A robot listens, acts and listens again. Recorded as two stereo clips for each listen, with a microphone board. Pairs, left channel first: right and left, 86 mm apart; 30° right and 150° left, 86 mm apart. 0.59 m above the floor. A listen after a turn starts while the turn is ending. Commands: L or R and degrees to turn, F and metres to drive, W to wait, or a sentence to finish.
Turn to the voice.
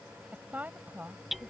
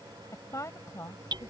L20
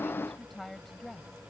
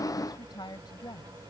Facing the woman speaking.